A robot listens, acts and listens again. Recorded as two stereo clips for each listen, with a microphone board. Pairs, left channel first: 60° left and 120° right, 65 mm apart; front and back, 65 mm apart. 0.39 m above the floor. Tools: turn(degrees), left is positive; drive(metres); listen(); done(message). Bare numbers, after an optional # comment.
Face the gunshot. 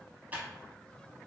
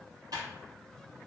listen()
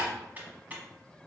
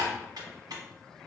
listen()
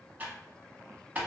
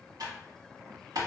done("I can't make out a gunshot, only typing on a keyboard.")